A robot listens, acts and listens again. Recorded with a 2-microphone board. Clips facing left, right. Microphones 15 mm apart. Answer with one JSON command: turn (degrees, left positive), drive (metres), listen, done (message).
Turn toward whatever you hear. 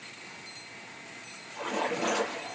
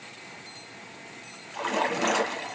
{"turn": -40}
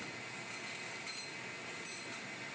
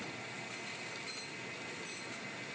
{"listen": true}
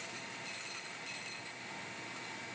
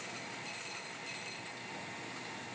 {"done": "I heard a splash, but can't make it out now. It was about straight ahead or 100° right."}